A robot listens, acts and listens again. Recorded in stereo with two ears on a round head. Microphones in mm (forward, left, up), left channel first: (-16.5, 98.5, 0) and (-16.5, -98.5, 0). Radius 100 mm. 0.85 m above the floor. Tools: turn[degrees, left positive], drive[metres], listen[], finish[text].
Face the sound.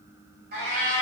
Thought: The cat meowing: about 40° right or 140° right.
Action: turn[-40]
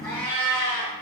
Thought: So it is at 15° left.
Action: turn[15]
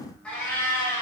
Thought: The cat meowing is now 15° left.
Action: turn[15]
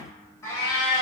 Thought: The cat meowing is now 20° left.
Action: turn[20]
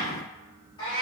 Thought: The cat meowing is now 25° left.
Action: turn[25]
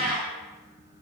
Action: finish[Facing the cat meowing, 1 to 2 m away.]